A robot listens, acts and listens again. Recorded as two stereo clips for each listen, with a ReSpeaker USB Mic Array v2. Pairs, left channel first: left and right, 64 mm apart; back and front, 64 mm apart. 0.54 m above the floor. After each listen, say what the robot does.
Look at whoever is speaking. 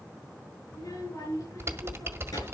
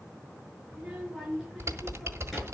Turn 85° left.
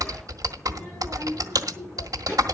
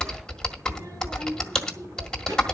Turn 35° left.
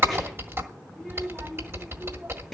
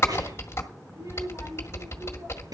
Found it: a child speaking, straight ahead, over 4 m away.